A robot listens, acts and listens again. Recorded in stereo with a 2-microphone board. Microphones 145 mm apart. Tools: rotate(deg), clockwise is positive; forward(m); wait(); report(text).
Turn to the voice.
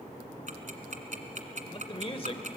rotate(-40)
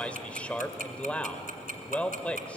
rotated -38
rotate(-10)
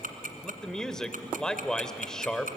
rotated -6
report("Found it: a man speaking, straight ahead, 1 to 2 m away.")